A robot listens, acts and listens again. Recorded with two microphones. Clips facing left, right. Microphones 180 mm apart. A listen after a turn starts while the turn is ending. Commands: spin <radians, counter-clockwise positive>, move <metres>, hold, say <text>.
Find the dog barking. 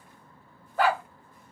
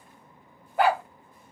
spin -0.52
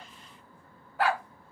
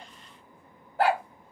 spin -2.36
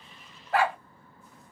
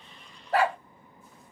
spin -0.70
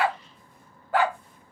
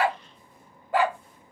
spin -0.35
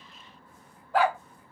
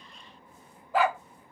say Facing the dog barking.